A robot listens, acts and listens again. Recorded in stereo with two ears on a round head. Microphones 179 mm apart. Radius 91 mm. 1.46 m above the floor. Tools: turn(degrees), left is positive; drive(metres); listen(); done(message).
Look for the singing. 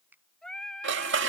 turn(degrees=30)
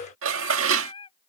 turn(degrees=155)
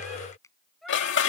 done("Found it: singing, straight ahead.")